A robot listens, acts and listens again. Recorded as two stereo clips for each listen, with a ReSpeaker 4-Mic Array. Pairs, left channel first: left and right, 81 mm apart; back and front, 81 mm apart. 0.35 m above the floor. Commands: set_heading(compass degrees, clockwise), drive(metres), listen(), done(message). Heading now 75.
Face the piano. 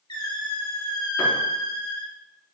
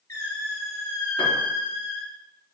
set_heading(255)
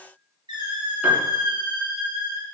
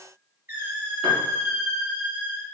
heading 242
set_heading(257)
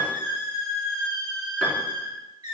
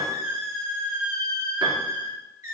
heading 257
done("Facing the piano, 2 to 4 m away.")